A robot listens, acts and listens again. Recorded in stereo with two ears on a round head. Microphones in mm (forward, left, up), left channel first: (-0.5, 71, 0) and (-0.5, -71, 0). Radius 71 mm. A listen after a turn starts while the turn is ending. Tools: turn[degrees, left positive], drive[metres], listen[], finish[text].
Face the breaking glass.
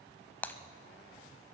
Action: turn[30]
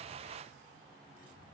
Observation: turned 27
Action: listen[]
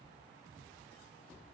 Action: finish[I heard breaking glass, but can't make it out now. It was about 15° right or 140° left.]